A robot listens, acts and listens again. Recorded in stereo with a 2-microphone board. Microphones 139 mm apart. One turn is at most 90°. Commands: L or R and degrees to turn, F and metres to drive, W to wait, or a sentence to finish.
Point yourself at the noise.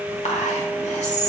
L60
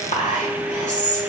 L60
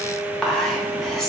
Facing the whispering.